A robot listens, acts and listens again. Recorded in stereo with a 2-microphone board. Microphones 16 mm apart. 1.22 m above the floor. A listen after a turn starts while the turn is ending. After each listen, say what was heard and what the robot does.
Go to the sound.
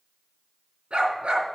Turn 90° right.
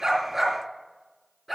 Drive 1.0 m forward.
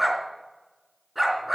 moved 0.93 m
Drive 1.0 m forward.
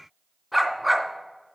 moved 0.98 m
Drive 1.0 m forward.
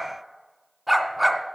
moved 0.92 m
The dog barking is now 15° right. Turn 15° right.
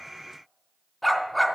Drive 1.0 m forward.
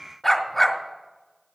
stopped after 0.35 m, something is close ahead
The dog barking is now 10° left. Turn 10° left.
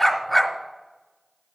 I am next to the dog barking.